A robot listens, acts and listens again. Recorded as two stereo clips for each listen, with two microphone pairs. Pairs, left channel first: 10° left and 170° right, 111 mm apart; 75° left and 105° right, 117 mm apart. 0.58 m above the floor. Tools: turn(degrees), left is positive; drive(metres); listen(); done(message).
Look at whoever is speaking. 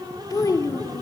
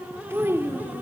turn(degrees=-40)
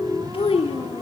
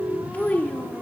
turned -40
done("Facing the child speaking.")